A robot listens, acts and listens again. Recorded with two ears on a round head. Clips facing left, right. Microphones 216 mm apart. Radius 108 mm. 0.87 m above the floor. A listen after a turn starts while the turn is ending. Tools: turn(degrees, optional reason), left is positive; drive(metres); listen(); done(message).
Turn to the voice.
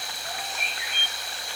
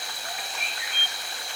listen()
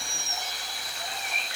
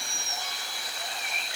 listen()
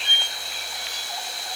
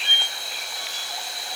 done("I can't make out anyone speaking, only a squeak.")